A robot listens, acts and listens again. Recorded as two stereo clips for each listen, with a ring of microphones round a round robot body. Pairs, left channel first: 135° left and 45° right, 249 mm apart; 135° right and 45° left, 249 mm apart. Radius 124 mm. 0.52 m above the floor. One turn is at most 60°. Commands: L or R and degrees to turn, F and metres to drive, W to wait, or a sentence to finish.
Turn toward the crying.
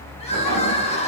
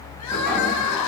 R60
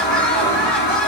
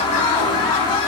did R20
R60
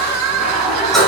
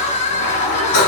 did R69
R60
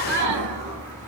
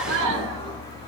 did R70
Found it: crying, straight ahead, 1 to 2 m away.